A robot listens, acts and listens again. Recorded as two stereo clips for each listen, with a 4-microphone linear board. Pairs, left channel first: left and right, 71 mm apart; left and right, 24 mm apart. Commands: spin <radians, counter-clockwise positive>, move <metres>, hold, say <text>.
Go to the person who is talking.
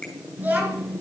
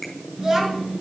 spin -0.44
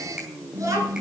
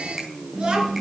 spin -2.27
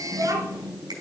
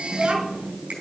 spin -0.96
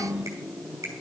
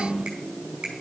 spin -0.17
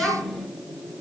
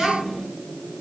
move 1.0
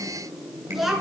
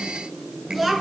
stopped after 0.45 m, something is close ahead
say Something is in my way. I am facing the child speaking but have not reached it.